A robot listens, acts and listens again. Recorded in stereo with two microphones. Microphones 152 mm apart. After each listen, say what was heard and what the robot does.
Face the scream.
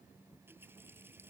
Keep listening.
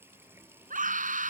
The scream: about 60° right or 120° right. Turn 60° right.
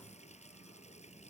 Keep listening.
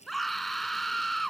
Found it: a scream, straight ahead.